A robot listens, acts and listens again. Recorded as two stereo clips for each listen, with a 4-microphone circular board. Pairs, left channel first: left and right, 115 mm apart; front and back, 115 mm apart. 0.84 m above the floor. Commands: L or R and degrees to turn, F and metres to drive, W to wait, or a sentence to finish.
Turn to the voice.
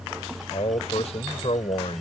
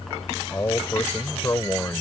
L65
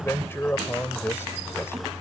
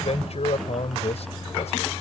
L20
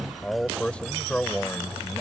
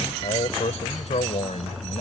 L10
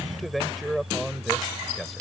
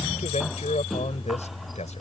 Found it: a man speaking, straight ahead.